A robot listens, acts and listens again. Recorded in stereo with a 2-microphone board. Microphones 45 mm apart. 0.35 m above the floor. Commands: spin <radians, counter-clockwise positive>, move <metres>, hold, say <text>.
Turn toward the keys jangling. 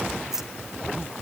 spin -0.52
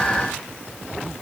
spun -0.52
hold
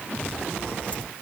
hold
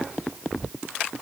say I heard keys jangling, but can't make it out now. It was about 20° left or 140° right.